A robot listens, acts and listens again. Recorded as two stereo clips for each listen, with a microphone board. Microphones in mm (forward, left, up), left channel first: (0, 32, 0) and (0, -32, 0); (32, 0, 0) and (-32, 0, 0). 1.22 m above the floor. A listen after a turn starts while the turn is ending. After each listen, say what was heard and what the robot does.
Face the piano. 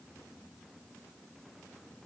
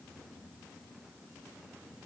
Keep listening.
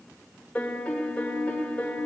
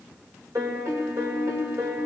The piano: 160° left. Turn 160° left.
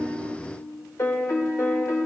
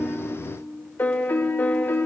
The piano is now 60° left. Turn 60° left.
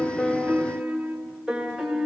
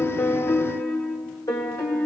Facing the piano.